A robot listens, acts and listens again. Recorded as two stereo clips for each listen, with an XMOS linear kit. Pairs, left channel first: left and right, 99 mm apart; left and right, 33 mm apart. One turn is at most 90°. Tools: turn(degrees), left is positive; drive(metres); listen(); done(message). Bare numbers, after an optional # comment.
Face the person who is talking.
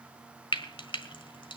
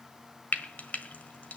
listen()
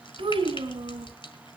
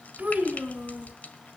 # The child speaking: about 60° right or 120° right.
turn(-60)
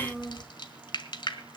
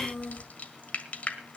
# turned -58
done("Found it: a child speaking, straight ahead.")